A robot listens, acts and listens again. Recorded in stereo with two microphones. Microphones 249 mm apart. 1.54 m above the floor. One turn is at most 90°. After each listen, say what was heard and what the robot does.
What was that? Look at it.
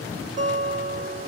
The guitar: about 45° right or 135° right. Turn 45° right.
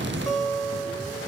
Facing the guitar.